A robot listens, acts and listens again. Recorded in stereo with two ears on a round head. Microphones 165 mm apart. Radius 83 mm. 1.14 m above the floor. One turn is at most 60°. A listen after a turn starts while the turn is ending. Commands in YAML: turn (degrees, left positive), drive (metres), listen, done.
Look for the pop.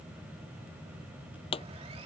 turn: 30
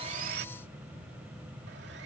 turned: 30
listen: true
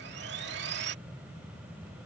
done: "I heard a pop, but can't make it out now. It was about straight ahead or 120° left."